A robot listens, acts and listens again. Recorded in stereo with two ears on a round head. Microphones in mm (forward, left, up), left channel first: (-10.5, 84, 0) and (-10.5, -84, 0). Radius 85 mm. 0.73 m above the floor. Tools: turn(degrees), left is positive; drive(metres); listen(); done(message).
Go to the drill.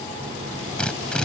turn(degrees=30)
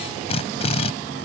turn(degrees=145)
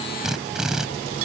drive(metres=1.0)
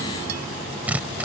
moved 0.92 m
turn(degrees=-10)
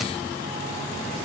listen()
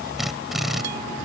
drive(metres=1.0)
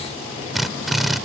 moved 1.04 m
drive(metres=1.0)
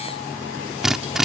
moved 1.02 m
drive(metres=1.0)
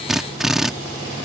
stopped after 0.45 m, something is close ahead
done("Arrived at the drill, straight ahead.")